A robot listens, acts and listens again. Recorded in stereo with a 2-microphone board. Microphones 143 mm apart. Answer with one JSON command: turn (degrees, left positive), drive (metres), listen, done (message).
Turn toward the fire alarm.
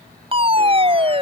{"turn": -40}
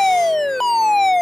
{"done": "Facing the fire alarm."}